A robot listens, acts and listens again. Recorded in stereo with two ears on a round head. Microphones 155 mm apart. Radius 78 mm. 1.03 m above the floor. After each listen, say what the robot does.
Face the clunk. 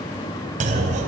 Turn 45° right.
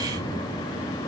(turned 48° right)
Keep listening.
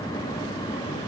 I heard a clunk, but can't make it out now. It was about 5° left or 90° right.